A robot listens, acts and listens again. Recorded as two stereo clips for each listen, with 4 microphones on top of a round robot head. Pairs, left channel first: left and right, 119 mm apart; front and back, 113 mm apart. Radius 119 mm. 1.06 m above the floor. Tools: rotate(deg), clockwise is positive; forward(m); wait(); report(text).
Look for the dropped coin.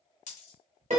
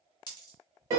rotate(-50)
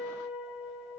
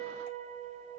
report("I heard a dropped coin from this way, but can't make it out now.")